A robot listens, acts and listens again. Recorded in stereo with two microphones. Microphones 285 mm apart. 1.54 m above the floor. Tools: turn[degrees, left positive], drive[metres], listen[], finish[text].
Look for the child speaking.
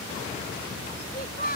Thought: The child speaking: about 30° left or 150° left.
Action: turn[30]
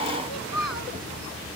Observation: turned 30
Thought: So it is at 115° left.
Action: turn[115]
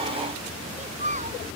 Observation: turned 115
Thought: The child speaking is now 25° right.
Action: turn[-25]
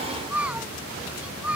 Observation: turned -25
Action: finish[Facing the child speaking.]